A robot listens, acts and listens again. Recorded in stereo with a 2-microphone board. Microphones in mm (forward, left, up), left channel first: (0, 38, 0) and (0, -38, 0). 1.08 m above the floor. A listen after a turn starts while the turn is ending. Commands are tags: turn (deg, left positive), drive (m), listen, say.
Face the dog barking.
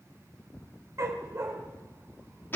<turn deg="-40"/>
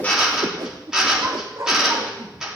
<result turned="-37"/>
<turn deg="-40"/>
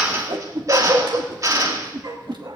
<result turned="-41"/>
<turn deg="-120"/>
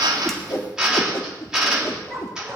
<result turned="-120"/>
<say>Facing the dog barking, 2 to 4 m away.</say>